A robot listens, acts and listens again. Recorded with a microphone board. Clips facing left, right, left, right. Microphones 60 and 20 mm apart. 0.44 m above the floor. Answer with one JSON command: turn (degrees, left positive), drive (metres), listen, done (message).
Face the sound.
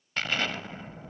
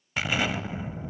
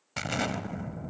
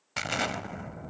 {"turn": -30}
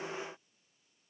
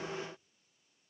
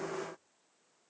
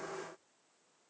{"listen": true}
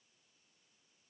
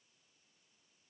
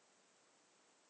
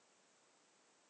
{"done": "I heard an explosion, but can't make it out now. It was about 20° left or 140° right."}